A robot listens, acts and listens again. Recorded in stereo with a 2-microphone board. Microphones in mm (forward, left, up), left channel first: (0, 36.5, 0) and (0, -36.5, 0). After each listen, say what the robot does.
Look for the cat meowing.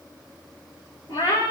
Turn 90° left.
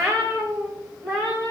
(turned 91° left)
Turn 10° left.
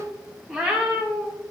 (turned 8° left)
Found it: a cat meowing, straight ahead, over 4 m away.